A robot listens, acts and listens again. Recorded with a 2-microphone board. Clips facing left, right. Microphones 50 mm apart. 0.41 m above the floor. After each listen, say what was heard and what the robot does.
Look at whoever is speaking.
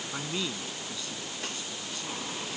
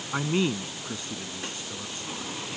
The man speaking: about 35° right or 145° right. Turn 35° right.
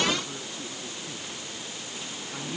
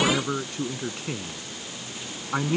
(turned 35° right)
So it is at 110° right. Turn 110° right.
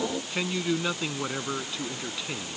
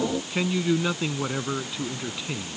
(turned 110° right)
Found it: a man speaking, straight ahead.